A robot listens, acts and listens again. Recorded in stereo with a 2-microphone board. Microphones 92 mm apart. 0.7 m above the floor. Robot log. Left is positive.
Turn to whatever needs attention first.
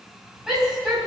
cmd yaw -30
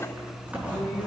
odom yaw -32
cmd idle
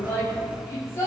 note: So it is at 30° left.
cmd yaw +30
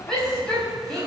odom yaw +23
end: Found it: a shout, straight ahead.